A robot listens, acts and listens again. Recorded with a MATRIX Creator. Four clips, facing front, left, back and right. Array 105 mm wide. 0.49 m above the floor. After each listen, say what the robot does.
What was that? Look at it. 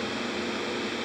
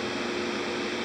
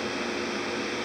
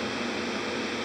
Keep listening.
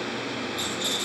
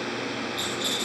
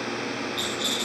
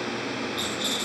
Turn 180° left.
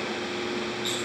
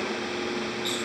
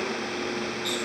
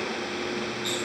Keep listening.
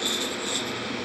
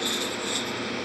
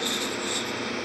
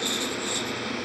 Turn 35° left.
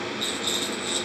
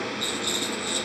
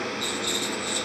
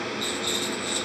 Turn 20° left.
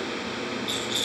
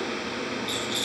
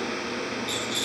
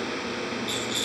Found it: a rattle, straight ahead, over 4 m away.